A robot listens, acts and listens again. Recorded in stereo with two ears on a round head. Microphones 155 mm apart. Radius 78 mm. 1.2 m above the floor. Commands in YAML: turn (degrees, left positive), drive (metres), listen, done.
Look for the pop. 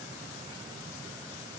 listen: true
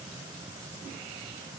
listen: true
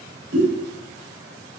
turn: -65
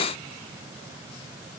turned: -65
listen: true
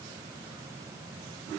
done: "I heard a pop, but can't make it out now. It was about straight ahead or 50° right."